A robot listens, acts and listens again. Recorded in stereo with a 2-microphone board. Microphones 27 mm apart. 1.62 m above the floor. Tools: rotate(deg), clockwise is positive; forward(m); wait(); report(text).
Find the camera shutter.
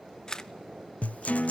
rotate(-30)
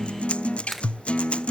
report("Facing the camera shutter.")